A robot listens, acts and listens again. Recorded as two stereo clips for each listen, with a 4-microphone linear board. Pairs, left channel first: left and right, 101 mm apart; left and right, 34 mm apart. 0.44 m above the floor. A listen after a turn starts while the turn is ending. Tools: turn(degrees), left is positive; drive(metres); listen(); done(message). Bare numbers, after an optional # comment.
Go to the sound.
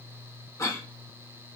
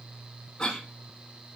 # The cough: about 30° left or 150° left.
turn(30)
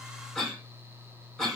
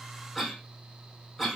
drive(1.0)
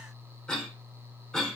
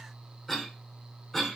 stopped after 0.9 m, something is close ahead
# The cough is now 10° left.
turn(10)
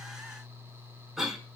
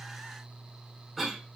done("I am next to the cough.")